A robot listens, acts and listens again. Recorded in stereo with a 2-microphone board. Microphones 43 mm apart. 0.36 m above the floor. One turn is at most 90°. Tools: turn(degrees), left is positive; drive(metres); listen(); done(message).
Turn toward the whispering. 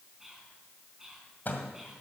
turn(degrees=-30)
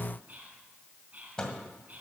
turn(degrees=-90)
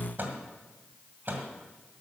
turn(degrees=-45)
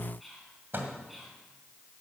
done("Found it: whispering, straight ahead, 2 to 4 m away.")